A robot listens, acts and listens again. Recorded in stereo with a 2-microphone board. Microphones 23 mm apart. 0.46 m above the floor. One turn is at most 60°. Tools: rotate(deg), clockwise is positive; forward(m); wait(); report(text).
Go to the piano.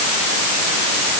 wait()
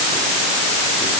wait()
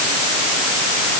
report("I can't make out a piano.")